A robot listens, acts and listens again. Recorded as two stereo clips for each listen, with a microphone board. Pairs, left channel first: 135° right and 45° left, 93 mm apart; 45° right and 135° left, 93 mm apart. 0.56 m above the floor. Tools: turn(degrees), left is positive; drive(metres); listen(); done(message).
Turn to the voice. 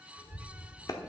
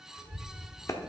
turn(degrees=-170)
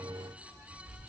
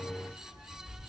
done("Facing the child speaking, 1 to 2 m away.")